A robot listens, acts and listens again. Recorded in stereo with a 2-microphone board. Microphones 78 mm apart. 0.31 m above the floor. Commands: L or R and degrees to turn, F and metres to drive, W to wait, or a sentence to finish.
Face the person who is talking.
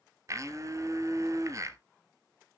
W
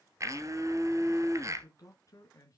L45
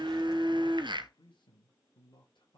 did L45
L100
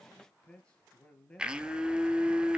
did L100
L15
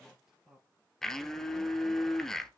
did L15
Facing the man speaking.